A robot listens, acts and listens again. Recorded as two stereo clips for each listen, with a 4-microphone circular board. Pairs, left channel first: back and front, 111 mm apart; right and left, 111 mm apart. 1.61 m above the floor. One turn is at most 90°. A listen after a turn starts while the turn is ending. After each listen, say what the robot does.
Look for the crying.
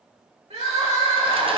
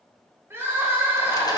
Turn 20° left.
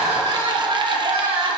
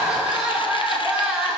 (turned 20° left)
Turn 10° left.
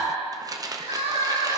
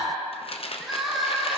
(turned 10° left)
Facing the crying.